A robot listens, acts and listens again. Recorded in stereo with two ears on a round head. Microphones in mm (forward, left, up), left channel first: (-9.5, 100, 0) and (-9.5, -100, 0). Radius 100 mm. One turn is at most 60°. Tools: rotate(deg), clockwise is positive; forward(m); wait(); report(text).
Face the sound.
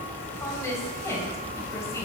rotate(-30)
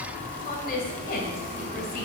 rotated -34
rotate(-60)
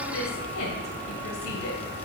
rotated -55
rotate(-60)
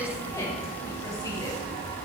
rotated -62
rotate(-15)
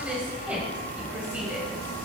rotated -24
report("Found it: a woman speaking, straight ahead, 1 to 2 m away.")